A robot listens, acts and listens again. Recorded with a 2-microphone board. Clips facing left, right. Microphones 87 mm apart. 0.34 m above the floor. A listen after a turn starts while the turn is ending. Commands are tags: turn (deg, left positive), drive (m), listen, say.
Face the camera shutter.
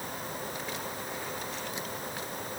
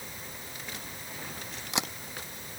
<turn deg="-90"/>
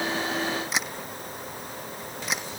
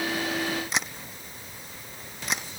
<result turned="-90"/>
<say>Found it: a camera shutter, straight ahead.</say>